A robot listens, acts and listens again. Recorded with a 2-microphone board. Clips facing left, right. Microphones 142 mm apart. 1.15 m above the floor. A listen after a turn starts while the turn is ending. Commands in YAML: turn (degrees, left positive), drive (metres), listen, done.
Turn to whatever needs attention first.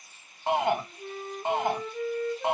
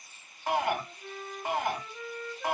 turn: 25
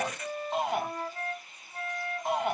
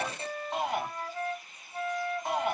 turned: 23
done: "Facing the shout, 1 to 2 m away."